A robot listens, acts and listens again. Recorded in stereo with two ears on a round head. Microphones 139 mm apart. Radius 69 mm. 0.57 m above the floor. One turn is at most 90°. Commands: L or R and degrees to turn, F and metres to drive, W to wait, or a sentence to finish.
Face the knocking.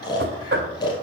R70
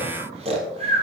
W
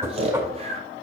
R20
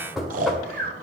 Facing the knocking.